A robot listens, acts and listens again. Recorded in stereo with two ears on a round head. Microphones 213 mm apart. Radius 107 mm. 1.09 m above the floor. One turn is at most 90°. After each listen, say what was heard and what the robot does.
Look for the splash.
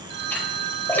Turn 30° left.
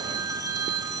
Keep listening.
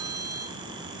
I heard a splash, but can't make it out now. It was about 20° right or 140° left.